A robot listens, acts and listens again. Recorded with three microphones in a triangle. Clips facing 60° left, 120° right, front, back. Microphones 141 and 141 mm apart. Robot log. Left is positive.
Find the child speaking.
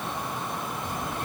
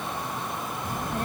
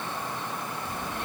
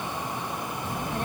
note: The child speaking: 145° right.
cmd yaw -145
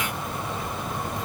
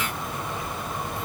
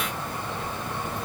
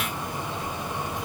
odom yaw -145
note: The child speaking is now 15° left.
cmd yaw +15
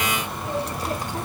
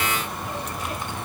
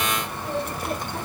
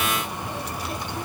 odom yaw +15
note: The child speaking is now 25° left.
cmd yaw +25
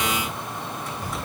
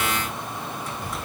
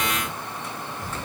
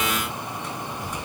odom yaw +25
note: The child speaking is now 25° left.
cmd yaw +25
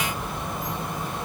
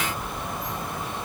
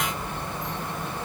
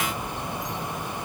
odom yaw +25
note: The child speaking is now 15° left.
cmd yaw +15
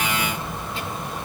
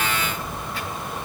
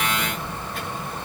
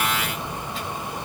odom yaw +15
end: Facing the child speaking.